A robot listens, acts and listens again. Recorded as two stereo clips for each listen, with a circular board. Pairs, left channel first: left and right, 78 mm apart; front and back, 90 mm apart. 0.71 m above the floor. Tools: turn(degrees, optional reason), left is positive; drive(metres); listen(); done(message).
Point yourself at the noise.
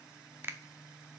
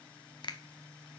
turn(degrees=-30, reason="The finger snap: 30° right.")
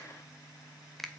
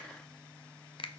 done("Facing the finger snap.")